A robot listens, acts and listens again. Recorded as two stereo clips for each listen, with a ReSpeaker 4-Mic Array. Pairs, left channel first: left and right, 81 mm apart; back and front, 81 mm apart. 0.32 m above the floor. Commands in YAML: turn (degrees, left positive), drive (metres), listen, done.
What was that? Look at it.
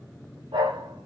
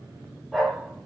turn: -90
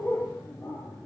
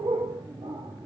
turn: 10
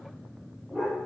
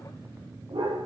done: "Facing the dog barking."